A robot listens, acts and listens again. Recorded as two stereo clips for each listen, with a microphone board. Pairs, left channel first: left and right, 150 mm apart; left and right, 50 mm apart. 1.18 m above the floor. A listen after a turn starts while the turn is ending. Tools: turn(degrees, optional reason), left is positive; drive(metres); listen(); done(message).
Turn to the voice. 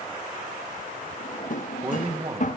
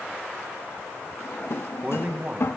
turn(degrees=-40, reason="The man speaking: about 40° right or 140° right.")
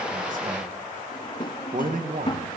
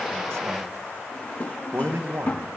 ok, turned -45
turn(degrees=-90, reason="So it is at 90° right.")
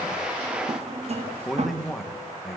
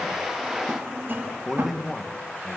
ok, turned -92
done("Facing the man speaking, 1 to 2 m away.")